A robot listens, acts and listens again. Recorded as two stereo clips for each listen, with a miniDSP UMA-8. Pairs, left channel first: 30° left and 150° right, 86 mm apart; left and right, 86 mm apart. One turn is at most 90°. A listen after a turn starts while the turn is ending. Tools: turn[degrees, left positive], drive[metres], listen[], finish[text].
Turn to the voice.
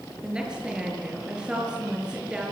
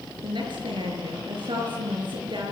Thought: The woman speaking: 70° right.
Action: turn[-70]
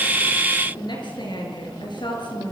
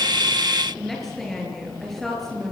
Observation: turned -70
Action: finish[Found it: a woman speaking, straight ahead, over 4 m away.]